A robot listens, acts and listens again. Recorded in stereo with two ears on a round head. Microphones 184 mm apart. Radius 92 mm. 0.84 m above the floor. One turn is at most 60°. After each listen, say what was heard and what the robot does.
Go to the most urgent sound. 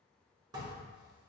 Keep listening.
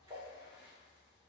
Keep listening.
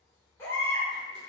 Turn 30° left.
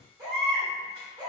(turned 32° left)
So it is at 20° right. Turn 20° right.
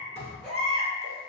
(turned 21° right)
Drive 1.0 m forward.
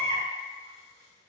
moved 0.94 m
The baby crying is now 10° left. Turn 10° left.
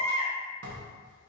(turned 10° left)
Drive 1.0 m forward.
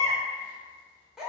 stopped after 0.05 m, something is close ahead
Arrived at the baby crying, straight ahead.